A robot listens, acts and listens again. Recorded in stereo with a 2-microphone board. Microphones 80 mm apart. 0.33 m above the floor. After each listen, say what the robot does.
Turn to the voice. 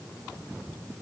Keep listening.
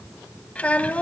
Turn 15° left.
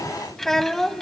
Facing the child speaking.